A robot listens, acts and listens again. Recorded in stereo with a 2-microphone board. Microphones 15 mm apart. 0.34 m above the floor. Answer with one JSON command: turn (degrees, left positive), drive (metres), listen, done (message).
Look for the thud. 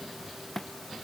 {"turn": 20}
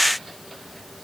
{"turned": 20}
{"listen": true}
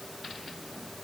{"done": "I heard a thud, but can't make it out now. It was about straight ahead or 140° left."}